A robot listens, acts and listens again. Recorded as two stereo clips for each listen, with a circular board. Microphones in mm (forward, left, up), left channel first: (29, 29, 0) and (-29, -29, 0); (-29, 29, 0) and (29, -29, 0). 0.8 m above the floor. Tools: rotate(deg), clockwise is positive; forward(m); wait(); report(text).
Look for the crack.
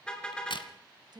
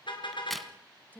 rotate(-45)
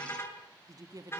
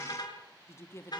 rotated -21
rotate(-25)
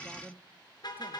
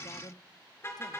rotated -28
report("Facing where the crack came from. I can't hear it now.")